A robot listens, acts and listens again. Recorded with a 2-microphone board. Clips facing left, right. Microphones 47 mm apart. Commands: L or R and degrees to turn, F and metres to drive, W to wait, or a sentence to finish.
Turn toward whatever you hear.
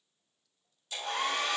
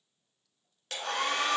R65
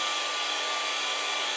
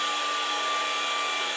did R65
R20
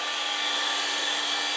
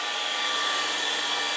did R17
Facing the hair dryer, 1 to 2 m away.